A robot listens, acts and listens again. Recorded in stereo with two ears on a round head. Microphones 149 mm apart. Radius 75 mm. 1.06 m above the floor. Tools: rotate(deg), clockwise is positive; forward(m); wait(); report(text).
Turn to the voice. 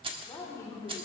rotate(-20)
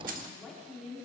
rotate(-30)
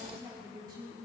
rotate(25)
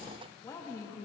rotate(-20)
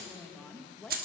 report("Found it: a woman speaking, straight ahead, 1 to 2 m away.")